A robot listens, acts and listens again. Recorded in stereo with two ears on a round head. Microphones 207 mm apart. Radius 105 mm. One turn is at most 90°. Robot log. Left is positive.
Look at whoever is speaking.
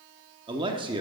note: The man speaking: about 20° right or 160° right.
cmd yaw -20
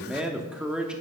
end: Found it: a man speaking, straight ahead.